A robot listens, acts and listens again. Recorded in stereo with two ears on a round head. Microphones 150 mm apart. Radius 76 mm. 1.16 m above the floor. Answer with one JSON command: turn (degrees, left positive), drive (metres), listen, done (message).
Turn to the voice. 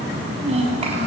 {"turn": -35}
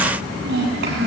{"turn": -110}
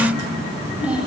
{"done": "Facing the child speaking, over 4 m away."}